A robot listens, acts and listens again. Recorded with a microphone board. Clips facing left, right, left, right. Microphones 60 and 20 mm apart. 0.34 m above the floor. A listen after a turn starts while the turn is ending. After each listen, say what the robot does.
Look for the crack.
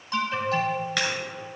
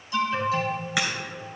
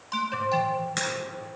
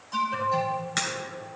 Turn 30° right.
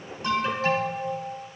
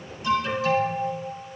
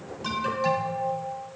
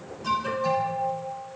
Keep listening.
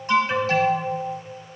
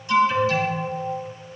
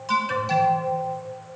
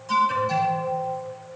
I heard a crack, but can't make it out now. It was about 20° left or 140° right.